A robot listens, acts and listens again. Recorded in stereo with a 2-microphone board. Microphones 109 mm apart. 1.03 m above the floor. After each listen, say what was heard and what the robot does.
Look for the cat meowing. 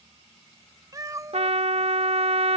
The cat meowing: about 30° right or 150° right. Turn 30° right.
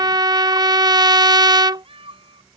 So it is at 125° right. Turn 125° right.
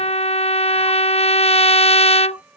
The cat meowing is now 15° right. Turn 15° right.
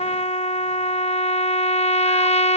Keep listening.
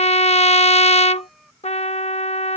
Found it: a cat meowing, straight ahead.